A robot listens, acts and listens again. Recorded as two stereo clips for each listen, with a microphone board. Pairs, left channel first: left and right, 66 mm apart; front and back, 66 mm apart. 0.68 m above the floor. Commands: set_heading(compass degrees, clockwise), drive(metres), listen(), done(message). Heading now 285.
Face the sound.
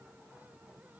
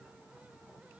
listen()
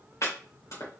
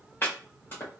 set_heading(235)
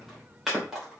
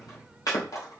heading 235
done("Found it: chopping, straight ahead, 2 to 4 m away.")